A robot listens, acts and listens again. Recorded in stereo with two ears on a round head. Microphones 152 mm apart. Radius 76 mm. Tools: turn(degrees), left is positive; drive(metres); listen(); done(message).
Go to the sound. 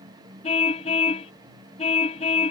turn(degrees=40)
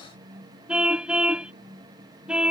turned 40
drive(metres=1.0)
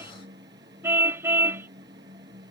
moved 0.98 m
turn(degrees=-15)
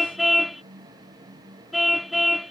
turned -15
drive(metres=1.0)
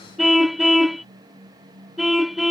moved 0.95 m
drive(metres=1.0)
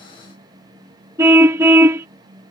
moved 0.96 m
turn(degrees=-15)
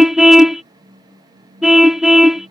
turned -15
drive(metres=1.0)
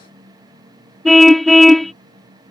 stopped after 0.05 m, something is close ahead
done("Arrived at the car horn, straight ahead.")